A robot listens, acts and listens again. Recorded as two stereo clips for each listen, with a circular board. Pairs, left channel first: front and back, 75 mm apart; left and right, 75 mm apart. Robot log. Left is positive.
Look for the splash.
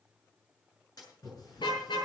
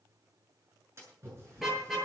note: The splash: 35° right.
cmd yaw -35
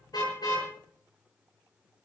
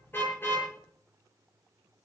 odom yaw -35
end: I heard a splash from this way, but can't make it out now.